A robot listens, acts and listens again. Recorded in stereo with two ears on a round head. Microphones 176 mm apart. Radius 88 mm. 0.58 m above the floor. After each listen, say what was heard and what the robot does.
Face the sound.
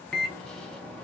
Turn 30° left.
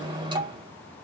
So it is at 25° right. Turn 25° right.
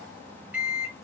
Found it: a microwave, straight ahead, under 1 m away.